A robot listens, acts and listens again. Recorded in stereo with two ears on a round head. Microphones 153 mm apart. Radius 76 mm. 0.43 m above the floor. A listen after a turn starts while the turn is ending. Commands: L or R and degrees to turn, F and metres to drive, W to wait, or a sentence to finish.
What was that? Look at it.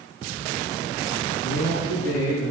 L75
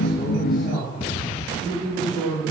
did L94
R10
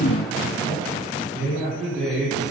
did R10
Facing the man speaking, over 4 m away.